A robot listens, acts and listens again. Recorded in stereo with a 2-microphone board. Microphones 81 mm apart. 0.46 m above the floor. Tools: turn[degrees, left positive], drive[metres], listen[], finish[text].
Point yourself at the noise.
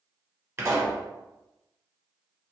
Thought: The pop: about 35° right or 145° right.
Action: turn[-35]
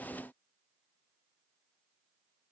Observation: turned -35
Action: listen[]
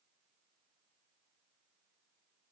Action: finish[I heard a pop, but can't make it out now. It was about straight ahead or 110° right.]